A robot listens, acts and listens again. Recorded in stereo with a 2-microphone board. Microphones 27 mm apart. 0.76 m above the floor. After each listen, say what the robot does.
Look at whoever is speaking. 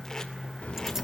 Turn 90° left.
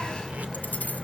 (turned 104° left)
Turn 30° right.
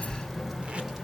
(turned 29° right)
Turn 10° right.
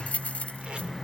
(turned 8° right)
Turn 10° right.
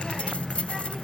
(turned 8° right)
Facing the child speaking.